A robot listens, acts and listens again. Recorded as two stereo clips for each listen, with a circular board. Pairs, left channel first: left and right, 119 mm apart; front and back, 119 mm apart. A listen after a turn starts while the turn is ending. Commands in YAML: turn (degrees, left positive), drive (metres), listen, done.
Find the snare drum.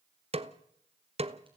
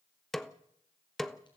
turn: -85
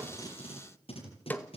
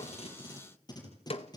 turn: 15
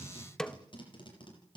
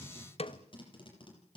done: "Found it: a snare drum, straight ahead."